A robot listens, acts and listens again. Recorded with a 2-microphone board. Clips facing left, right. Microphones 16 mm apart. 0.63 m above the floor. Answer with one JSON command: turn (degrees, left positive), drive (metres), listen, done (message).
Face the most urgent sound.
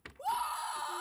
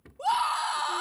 {"turn": -50}
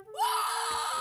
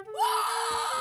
{"done": "Found it: a scream, straight ahead."}